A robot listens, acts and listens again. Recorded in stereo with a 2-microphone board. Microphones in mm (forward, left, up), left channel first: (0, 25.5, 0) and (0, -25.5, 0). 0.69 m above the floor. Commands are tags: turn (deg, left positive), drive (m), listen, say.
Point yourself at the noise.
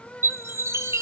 <turn deg="-65"/>
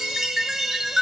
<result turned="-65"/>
<turn deg="-10"/>
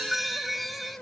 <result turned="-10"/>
<say>Found it: a chime, straight ahead.</say>